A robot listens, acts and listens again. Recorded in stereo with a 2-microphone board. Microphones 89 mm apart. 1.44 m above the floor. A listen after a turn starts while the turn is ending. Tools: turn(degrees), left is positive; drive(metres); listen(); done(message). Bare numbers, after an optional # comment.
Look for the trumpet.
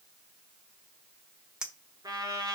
# The trumpet: about 50° right or 130° right.
turn(-50)
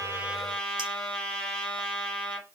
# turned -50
done("Found it: a trumpet, straight ahead, 2 to 4 m away.")